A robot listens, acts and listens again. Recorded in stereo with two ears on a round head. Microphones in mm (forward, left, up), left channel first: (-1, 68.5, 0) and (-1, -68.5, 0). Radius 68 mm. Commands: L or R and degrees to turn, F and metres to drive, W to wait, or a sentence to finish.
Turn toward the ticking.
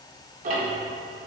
R50
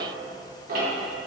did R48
R75
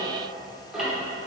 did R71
Found it: ticking, straight ahead, under 1 m away.